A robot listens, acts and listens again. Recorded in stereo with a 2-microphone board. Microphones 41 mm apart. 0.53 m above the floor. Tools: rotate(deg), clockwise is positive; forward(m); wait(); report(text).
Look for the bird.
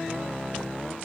wait()
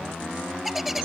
rotate(-30)
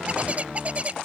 rotate(35)
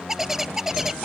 report("Facing the bird.")